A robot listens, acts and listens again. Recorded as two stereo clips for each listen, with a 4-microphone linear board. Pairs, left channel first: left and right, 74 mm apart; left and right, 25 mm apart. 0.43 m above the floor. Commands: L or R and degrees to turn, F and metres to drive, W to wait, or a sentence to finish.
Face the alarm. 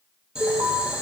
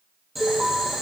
R35
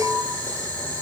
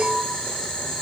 R10
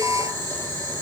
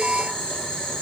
Found it: an alarm, straight ahead.